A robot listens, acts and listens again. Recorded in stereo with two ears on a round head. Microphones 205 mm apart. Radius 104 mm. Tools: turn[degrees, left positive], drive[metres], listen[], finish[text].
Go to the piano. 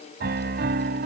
Thought: The piano: about 50° right or 130° right.
Action: turn[-50]
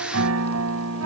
Thought: So it is at 75° right.
Action: turn[-75]
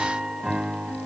Action: drive[1.0]
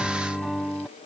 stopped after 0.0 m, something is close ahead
Action: finish[Something is in my way. I am facing the piano but have not reached it.]